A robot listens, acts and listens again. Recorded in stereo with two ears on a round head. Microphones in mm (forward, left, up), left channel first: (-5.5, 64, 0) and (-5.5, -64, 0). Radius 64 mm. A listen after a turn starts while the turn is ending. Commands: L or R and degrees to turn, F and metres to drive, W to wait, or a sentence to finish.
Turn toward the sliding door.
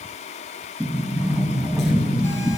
R30
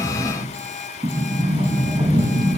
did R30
R145
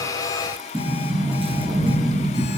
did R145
R35
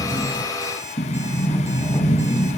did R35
L15
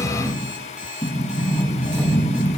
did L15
Found it: a sliding door, straight ahead, over 4 m away.